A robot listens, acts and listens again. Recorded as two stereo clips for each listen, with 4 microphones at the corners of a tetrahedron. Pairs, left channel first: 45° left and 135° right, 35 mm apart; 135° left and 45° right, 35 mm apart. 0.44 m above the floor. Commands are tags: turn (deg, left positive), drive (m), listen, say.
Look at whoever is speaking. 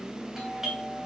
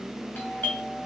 <listen/>
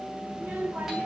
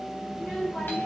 <turn deg="-170"/>
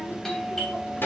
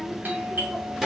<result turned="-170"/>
<turn deg="35"/>
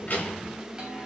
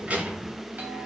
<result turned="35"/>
<say>Found it: a child speaking, straight ahead, 2 to 4 m away.</say>